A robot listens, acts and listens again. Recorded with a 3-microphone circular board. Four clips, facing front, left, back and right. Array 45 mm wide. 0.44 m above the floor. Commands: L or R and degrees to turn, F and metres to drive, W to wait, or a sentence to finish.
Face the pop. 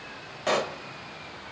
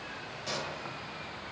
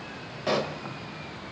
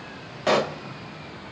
R75
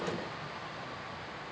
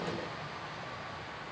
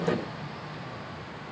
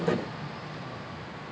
I heard a pop from this way, but can't make it out now.